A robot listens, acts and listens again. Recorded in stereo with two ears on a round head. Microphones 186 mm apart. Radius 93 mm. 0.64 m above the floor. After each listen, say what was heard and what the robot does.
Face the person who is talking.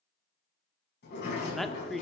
Turn 30° left.
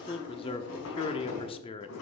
So it is at 150° left. Turn 150° left.
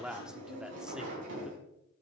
Found it: a man speaking, straight ahead.